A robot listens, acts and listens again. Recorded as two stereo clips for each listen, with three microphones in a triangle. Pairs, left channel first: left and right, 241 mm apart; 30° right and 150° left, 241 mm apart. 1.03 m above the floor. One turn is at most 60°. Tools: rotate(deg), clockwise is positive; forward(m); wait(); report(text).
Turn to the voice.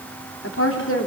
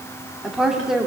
rotate(-60)
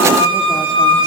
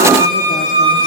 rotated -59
wait()
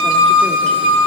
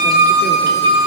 wait()
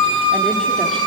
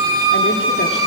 report("I heard a woman speaking from this way, but can't make it out now.")